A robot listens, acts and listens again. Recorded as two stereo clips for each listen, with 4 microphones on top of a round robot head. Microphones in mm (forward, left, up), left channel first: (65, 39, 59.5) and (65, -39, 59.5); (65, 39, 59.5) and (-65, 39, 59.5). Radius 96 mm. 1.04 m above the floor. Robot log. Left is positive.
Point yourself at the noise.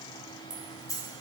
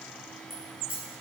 note: The keys jangling: 50° left.
cmd yaw +50
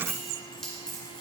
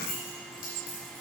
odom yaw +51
note: The keys jangling is now 10° left.
cmd yaw +10
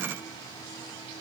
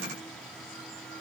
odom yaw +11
cmd idle
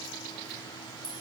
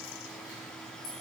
note: The keys jangling is now 15° left.
cmd yaw +15
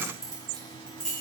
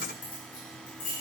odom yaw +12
note: The keys jangling is now 10° left.
cmd yaw +10
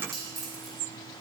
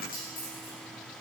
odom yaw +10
end: Facing the keys jangling, 2 to 4 m away.